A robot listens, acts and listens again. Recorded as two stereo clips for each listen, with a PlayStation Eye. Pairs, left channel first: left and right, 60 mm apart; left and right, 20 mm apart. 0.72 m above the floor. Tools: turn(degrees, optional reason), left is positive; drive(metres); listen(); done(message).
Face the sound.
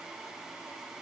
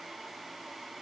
listen()
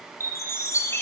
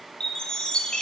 turn(degrees=50, reason="The chime: about 50° left or 130° left.")
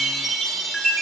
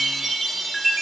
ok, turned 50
done("Facing the chime.")